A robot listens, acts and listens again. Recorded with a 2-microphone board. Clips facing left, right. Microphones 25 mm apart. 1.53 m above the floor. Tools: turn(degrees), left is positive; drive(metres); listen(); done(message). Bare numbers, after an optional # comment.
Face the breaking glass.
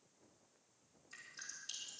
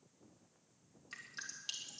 listen()
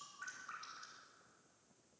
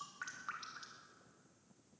listen()
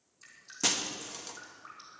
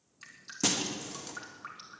turn(30)
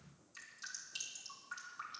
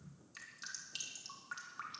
listen()
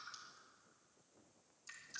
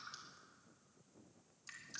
done("I heard breaking glass, but can't make it out now. It was about 30° right or 150° left.")